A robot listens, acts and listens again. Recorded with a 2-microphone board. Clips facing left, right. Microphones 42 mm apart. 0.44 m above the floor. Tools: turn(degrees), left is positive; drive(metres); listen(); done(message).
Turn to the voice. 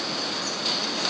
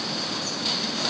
listen()
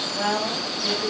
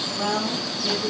turn(degrees=50)
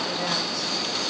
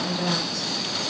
turn(degrees=15)
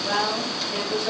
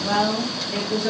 done("Found it: a woman speaking, straight ahead, 1 to 2 m away.")